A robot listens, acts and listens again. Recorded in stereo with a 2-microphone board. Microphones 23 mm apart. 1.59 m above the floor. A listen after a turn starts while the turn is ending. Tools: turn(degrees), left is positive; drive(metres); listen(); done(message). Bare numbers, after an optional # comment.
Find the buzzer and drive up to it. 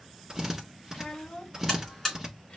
# The buzzer: about 15° left or 165° left.
turn(15)
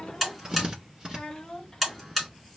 drive(1.0)
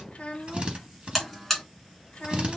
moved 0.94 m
drive(1.0)
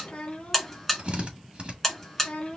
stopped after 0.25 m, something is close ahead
# The buzzer is now 10° left.
turn(10)
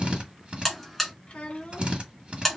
done("Arrived at the buzzer, straight ahead.")